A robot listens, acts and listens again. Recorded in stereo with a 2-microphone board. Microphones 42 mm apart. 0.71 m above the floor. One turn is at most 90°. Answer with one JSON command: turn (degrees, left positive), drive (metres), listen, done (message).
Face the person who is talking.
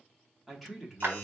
{"turn": 30}
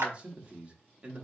{"turn": -30}
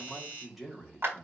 {"done": "Found it: a man speaking, straight ahead, 1 to 2 m away."}